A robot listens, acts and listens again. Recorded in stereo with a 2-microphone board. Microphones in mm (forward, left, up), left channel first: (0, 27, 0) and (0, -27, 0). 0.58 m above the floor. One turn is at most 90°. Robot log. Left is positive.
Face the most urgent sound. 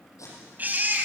note: The baby crying: about 35° right or 145° right.
cmd yaw -35
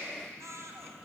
note: So it is at 110° right.
cmd yaw -90
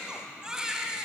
note: The baby crying is now 10° right.
cmd yaw -10
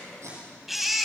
end: Found it: a baby crying, straight ahead, 2 to 4 m away.